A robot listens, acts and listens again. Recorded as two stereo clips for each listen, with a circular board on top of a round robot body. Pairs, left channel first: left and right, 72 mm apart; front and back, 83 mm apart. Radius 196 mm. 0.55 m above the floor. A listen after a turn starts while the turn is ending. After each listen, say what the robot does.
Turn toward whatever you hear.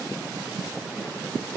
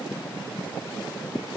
Keep listening.
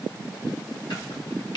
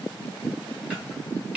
Turn 105° left.
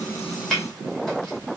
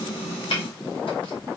Found it: chopping, straight ahead, 2 to 4 m away.